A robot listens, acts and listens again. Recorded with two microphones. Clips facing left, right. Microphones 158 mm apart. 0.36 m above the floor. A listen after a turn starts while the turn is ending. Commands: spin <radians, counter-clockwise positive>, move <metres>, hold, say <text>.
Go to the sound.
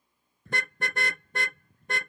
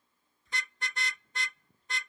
spin 1.05
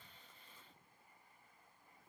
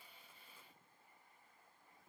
hold
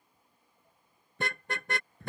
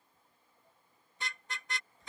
spin 1.05
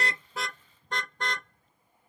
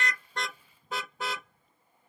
move 1.0
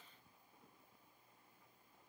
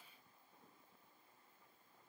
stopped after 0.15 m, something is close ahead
hold
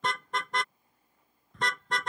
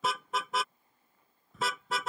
say Blocked. The car horn is further on, straight ahead.